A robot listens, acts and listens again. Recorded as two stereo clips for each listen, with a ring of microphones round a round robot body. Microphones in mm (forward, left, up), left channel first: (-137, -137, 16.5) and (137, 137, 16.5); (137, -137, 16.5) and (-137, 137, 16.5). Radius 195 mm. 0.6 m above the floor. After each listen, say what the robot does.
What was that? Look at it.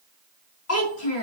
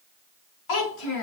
Turn 80° right.
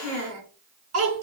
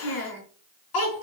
Turn 10° right.
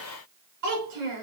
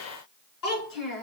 Found it: a child speaking, straight ahead, over 4 m away.